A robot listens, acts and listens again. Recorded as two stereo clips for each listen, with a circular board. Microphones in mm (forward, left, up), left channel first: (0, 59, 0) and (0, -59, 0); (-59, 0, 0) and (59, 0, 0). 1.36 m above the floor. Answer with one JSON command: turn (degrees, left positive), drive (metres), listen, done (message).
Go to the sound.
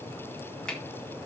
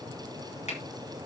{"turn": 170}
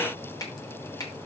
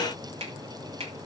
{"turn": 35}
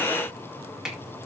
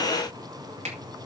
{"drive": 1.0}
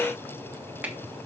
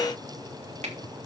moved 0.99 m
{"turn": -15}
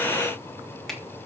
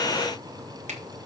{"drive": 1.0}
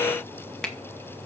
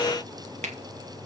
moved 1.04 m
{"drive": 1.0}
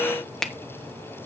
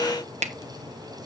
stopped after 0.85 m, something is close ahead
{"done": "I am next to the finger snap."}